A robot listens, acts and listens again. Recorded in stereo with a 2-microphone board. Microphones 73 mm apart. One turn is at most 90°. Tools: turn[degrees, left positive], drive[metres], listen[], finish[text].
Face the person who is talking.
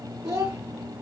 Thought: The child speaking: about 60° right or 120° right.
Action: turn[-60]
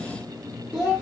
Action: finish[Facing the child speaking.]